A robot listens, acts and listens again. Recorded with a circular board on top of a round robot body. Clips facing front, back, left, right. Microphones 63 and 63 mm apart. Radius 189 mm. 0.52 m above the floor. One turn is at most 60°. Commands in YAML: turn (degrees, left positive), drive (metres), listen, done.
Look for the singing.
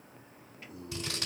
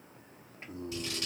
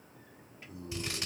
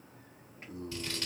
turn: -60
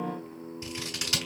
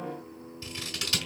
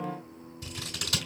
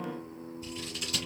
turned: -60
turn: -20
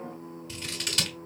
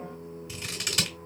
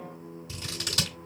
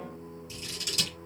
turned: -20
turn: 30
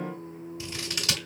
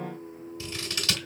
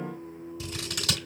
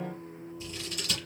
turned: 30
turn: 20
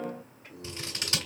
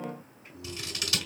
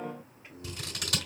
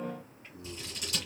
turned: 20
turn: 20
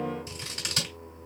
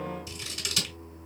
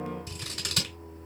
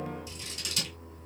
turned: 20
done: "Facing the singing."